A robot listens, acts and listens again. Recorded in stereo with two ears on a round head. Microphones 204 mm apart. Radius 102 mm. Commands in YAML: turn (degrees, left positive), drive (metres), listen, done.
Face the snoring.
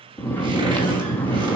turn: 30
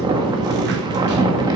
turn: -20
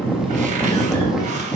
done: "Facing the snoring, 1 to 2 m away."